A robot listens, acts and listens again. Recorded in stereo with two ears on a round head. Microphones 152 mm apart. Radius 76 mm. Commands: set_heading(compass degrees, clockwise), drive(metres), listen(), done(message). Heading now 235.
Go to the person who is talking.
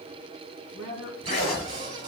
set_heading(215)
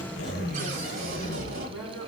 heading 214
drive(1.0)
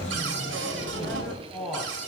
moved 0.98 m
drive(1.0)
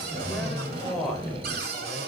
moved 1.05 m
drive(1.0)
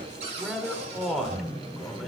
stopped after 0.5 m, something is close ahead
done("I am next to the man speaking.")